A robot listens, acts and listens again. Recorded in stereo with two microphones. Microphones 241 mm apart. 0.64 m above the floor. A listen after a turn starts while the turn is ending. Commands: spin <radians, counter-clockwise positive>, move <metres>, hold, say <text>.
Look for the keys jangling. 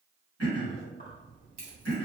spin -0.61
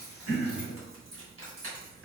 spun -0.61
spin -1.83
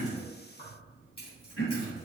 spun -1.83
spin 0.44
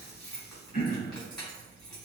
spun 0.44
say Facing the keys jangling.